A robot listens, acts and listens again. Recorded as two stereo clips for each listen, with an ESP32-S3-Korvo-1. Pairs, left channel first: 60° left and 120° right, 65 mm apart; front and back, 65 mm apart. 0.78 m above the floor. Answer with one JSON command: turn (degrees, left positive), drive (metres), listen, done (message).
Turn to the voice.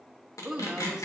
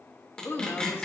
{"turn": -40}
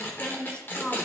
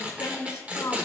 {"done": "Found it: a woman speaking, straight ahead."}